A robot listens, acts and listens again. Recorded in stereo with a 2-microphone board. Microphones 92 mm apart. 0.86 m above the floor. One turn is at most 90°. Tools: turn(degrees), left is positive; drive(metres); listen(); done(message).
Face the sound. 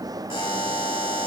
turn(degrees=65)
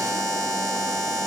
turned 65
done("Found it: a buzzer, straight ahead.")